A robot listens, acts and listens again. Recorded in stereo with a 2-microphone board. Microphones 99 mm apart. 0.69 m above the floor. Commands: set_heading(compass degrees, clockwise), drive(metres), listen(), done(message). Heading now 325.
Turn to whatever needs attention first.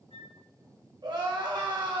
set_heading(15)
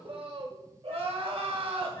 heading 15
set_heading(95)
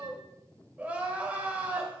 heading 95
set_heading(110)
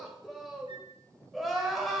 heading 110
done("Facing the crying, 1 to 2 m away.")